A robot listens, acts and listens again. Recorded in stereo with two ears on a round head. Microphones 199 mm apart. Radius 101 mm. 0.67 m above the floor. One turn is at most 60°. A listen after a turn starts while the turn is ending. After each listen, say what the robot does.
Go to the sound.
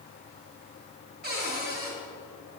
Turn 50° right.
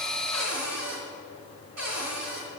Turn 60° right.
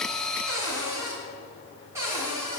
Turn 15° right.
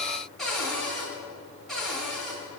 Drive 1.0 m forward.
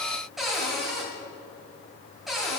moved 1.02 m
Drive 1.0 m forward.
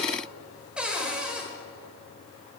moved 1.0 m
Drive 1.0 m forward.
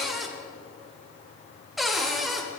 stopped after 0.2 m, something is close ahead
I am next to the cupboard door.